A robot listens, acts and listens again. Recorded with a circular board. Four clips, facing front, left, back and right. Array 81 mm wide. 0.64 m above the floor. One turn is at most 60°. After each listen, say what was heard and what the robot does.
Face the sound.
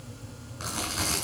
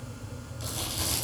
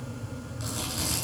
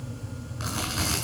The chewing: 50° right. Turn 50° right.
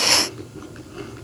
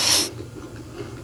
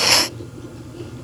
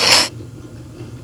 Keep listening.
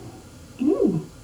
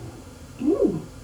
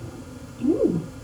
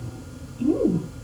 The chewing is now 25° left. Turn 25° left.
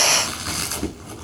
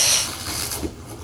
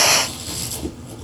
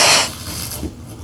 The chewing is now 10° left. Turn 10° left.
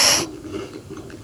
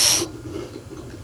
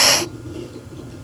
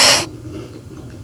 Facing the chewing.